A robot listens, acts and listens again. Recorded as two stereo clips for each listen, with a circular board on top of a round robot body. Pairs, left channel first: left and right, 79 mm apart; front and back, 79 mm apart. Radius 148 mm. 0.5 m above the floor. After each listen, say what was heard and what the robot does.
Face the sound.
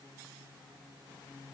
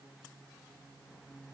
Keep listening.
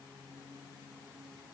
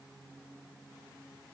Keep listening.
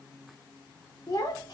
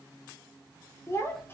The child speaking: 60° left. Turn 60° left.
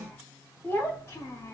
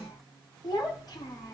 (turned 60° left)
The child speaking is now 40° left. Turn 40° left.
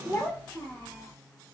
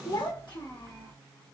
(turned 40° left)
The child speaking is now 25° left. Turn 25° left.
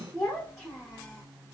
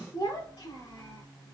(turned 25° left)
Facing the child speaking.